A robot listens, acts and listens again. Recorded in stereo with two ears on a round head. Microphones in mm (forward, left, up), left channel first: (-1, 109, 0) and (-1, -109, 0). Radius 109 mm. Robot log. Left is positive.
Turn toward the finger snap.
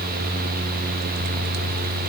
cmd idle
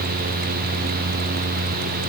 cmd idle
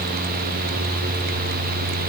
end: I can't make out a finger snap.